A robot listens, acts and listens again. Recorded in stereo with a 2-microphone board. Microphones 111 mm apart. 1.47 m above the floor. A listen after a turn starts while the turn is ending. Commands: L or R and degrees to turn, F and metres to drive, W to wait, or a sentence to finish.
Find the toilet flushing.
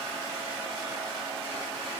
W
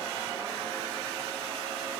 W
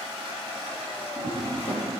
L55
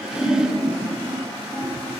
L70
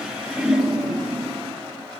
Facing the toilet flushing.